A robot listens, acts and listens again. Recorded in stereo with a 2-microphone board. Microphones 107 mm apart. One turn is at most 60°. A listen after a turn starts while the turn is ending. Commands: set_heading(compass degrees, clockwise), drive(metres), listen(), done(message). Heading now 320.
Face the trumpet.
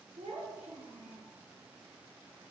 listen()
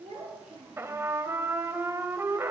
set_heading(345)
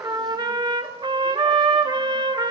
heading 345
set_heading(45)
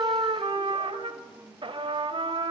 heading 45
set_heading(105)
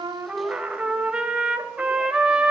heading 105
set_heading(115)
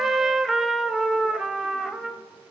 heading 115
done("Facing the trumpet, 1 to 2 m away.")